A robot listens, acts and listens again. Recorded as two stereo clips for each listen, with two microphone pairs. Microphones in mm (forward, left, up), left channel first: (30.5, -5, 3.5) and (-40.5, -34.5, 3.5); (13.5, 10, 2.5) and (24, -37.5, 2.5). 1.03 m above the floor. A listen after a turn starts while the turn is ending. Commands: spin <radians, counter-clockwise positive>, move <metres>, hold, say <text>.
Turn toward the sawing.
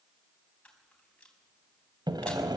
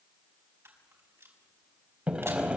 spin -2.53
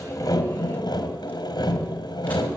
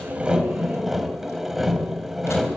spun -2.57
say Found it: sawing, straight ahead.